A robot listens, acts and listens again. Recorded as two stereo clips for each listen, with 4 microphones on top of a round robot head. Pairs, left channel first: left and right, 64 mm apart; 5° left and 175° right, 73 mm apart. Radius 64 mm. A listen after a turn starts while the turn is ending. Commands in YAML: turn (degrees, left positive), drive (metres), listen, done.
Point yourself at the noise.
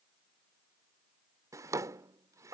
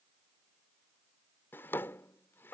turn: -60
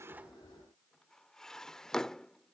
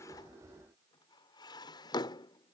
turn: 10
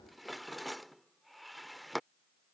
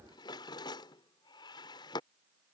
done: "Found it: a drawer, straight ahead."